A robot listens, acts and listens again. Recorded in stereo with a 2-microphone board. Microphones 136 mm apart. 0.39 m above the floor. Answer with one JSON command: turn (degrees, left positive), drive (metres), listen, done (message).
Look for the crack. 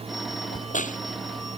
{"turn": 70}
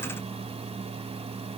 {"listen": true}
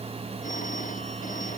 {"done": "I heard a crack, but can't make it out now. It was about straight ahead or 40° left."}